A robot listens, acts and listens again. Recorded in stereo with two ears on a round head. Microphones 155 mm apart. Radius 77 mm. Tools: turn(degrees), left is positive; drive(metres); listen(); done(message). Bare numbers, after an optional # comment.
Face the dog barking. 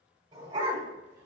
# The dog barking: about 30° right or 150° right.
turn(-30)
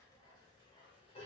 # So it is at 35° left.
turn(35)
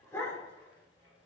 # The dog barking is now 20° left.
turn(20)
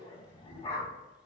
# The dog barking is now 30° left.
turn(30)
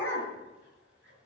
# The dog barking is now 15° left.
turn(15)
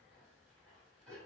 done("Facing the dog barking, 2 to 4 m away.")